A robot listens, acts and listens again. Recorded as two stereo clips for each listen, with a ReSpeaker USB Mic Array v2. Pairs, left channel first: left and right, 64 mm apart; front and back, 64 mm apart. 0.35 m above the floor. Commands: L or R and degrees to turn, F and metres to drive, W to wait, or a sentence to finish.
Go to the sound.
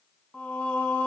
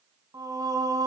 L160
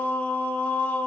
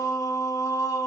L25
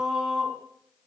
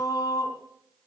R10
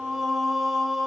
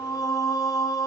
F1.0
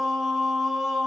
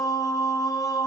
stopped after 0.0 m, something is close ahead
Something is in my way. I am facing the singing but have not reached it.